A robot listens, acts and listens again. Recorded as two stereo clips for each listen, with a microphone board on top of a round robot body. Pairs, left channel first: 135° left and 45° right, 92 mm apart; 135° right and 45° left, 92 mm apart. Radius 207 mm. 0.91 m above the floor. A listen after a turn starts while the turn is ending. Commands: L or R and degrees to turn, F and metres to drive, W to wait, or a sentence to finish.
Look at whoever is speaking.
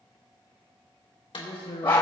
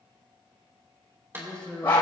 L145
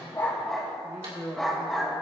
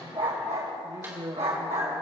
L15
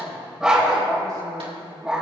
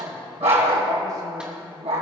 W
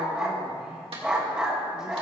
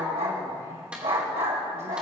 W
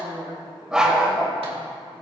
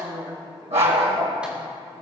Found it: a man speaking, straight ahead.